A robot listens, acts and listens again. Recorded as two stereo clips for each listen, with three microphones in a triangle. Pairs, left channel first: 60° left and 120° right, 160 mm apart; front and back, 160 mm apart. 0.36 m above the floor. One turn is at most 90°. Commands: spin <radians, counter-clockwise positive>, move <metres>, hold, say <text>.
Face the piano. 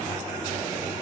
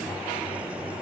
hold
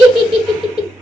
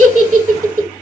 hold
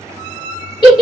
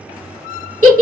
say I can't make out a piano to turn to.